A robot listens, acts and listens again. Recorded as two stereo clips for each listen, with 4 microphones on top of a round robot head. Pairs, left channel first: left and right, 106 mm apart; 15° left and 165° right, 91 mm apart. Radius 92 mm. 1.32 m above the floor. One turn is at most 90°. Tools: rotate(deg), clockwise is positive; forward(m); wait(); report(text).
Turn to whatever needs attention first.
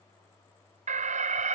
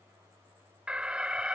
rotate(85)
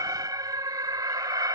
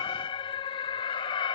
rotate(30)
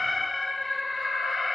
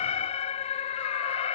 report("Found it: an alarm, straight ahead.")